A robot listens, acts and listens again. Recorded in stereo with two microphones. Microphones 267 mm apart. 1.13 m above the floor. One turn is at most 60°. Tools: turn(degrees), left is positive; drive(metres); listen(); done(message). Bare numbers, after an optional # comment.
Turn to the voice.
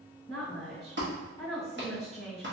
# The woman speaking: about 25° left or 155° left.
turn(25)
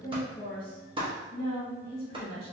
# So it is at 130° left.
turn(60)
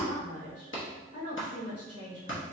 # The woman speaking is now 65° left.
turn(60)
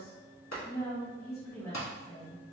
# The woman speaking is now 10° left.
turn(10)
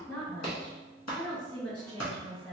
done("Facing the woman speaking, 1 to 2 m away.")